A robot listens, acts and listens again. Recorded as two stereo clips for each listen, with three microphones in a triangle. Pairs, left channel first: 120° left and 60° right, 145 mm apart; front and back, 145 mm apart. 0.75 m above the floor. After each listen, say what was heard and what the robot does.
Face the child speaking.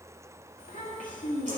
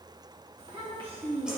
The child speaking: 130° left. Turn 130° left.
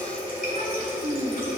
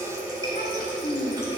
The child speaking is now 20° right. Turn 20° right.
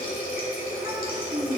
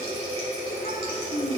Found it: a child speaking, straight ahead, 1 to 2 m away.